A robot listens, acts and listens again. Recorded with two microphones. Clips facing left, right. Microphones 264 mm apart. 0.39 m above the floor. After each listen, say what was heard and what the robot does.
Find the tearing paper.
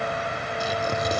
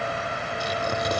Turn 30° left.
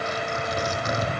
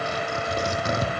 So it is at 30° right. Turn 30° right.
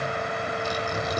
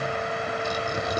The tearing paper is now 10° right. Turn 10° right.
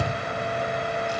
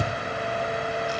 Found it: tearing paper, straight ahead, 2 to 4 m away.